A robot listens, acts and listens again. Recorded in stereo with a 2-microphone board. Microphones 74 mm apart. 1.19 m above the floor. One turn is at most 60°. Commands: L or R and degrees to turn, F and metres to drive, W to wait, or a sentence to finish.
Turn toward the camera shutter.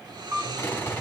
R45
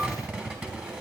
W
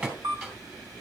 R60
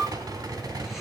R40
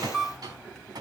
Found it: a camera shutter, straight ahead.